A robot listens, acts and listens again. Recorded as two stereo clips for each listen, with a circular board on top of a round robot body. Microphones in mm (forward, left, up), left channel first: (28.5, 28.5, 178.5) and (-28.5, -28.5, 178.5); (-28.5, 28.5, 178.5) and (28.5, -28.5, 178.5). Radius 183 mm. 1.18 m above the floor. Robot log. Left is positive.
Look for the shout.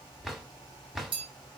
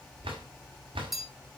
cmd idle
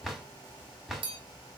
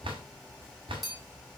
cmd idle
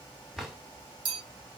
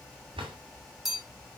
end: I can't make out a shout, only a drawer and a bell.